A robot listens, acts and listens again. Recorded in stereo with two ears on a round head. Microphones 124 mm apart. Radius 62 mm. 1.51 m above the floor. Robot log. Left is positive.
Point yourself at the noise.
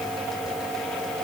cmd idle
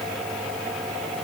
cmd idle
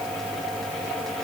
end: I can't make out anything.